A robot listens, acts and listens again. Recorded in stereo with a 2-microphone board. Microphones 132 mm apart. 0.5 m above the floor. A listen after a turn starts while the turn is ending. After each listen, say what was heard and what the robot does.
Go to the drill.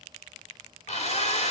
The drill: about 60° left or 120° left. Turn 60° left.
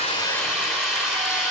Drive 1.0 m forward.
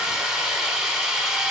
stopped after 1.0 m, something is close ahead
I am next to the drill.